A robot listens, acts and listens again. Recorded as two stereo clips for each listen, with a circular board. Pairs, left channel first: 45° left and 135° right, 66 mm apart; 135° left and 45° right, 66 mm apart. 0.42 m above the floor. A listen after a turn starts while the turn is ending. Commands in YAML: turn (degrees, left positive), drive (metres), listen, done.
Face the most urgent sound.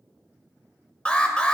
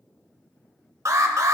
turn: -20
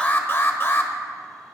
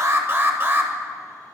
done: "Found it: an alarm, straight ahead, 1 to 2 m away."